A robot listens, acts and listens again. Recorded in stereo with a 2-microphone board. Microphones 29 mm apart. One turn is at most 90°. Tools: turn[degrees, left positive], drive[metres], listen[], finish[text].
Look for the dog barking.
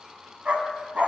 Thought: The dog barking: about 55° right or 125° right.
Action: turn[-55]
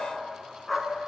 Action: finish[Facing the dog barking.]